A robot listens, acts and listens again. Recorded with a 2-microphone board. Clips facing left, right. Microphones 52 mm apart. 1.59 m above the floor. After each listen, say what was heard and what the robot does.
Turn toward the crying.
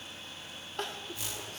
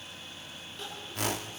The crying: about 55° left or 125° left. Turn 55° left.
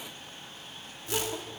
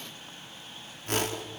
Keep listening.
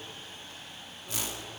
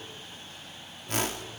Keep listening.
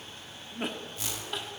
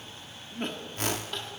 Found it: crying, straight ahead.